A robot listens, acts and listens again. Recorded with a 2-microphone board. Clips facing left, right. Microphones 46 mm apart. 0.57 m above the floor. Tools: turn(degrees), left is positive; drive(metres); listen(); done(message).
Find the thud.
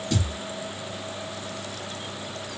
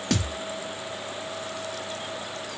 turn(degrees=-90)
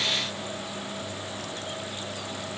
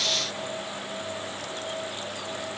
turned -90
done("I heard a thud from this way, but can't make it out now.")